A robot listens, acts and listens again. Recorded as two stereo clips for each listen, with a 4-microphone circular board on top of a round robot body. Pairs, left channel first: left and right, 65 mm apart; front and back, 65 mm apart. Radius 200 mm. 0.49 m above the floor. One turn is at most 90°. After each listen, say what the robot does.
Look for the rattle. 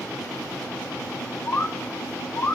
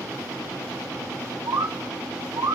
Keep listening.
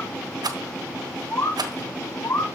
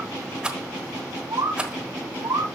Turn 90° right.
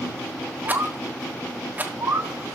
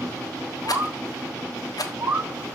Turn 25° right.
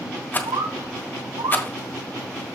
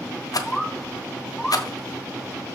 Turn 30° left.
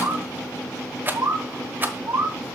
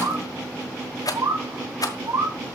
Turn 25° right.
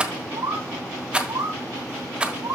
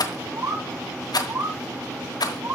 Turn 15° right.
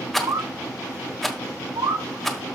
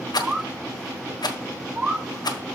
Found it: a rattle, straight ahead, 1 to 2 m away.